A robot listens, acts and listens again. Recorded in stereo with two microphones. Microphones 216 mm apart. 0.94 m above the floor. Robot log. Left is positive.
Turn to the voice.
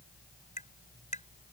cmd idle
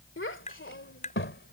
note: The child speaking: about 65° left or 115° left.
cmd yaw +65
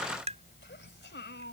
note: So it is at 55° left.
cmd yaw +55
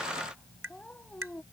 end: Found it: a child speaking, straight ahead.